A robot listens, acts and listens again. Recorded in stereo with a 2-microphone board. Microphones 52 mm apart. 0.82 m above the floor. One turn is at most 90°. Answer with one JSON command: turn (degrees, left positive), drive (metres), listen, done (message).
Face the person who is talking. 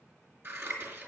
{"listen": true}
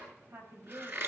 {"turn": -55}
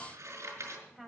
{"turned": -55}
{"done": "Found it: a woman speaking, straight ahead, over 4 m away."}